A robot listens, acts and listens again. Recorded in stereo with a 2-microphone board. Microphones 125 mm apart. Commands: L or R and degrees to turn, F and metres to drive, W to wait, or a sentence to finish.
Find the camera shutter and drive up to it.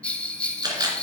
R35
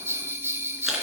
W
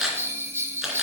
F1.0
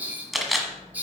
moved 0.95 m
F1.0
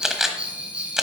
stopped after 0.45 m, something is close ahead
Arrived at the camera shutter, straight ahead.